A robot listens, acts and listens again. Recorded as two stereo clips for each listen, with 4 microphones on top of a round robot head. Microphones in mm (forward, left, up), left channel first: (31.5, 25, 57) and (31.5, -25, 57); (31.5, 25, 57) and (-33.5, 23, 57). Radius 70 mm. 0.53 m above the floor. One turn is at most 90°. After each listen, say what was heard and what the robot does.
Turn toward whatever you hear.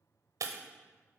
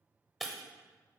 The breaking glass: 90° right. Turn 90° right.
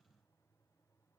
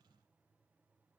I heard breaking glass from this way, but can't make it out now.